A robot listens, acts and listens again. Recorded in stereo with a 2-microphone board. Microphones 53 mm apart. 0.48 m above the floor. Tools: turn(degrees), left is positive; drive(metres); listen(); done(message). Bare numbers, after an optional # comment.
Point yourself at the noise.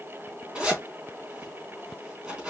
# The zipper: about 15° right or 165° right.
turn(-15)
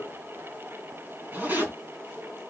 # So it is at 150° right.
turn(-150)
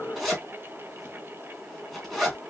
done("Facing the zipper, 2 to 4 m away.")